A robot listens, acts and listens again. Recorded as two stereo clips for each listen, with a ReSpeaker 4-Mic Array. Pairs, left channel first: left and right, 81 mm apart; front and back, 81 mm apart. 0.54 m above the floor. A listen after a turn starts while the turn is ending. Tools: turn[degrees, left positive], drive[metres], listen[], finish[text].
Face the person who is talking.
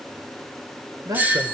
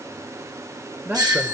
Thought: The man speaking: 115° right.
Action: turn[-115]
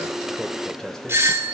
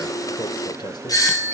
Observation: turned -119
Action: finish[Found it: a man speaking, straight ahead, 1 to 2 m away.]